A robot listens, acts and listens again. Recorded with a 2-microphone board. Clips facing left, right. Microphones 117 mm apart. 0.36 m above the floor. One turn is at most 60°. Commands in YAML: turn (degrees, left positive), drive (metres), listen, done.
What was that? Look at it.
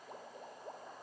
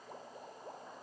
listen: true
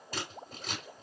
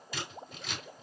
turn: 45
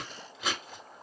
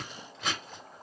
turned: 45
done: "Found it: scissors, straight ahead, 2 to 4 m away."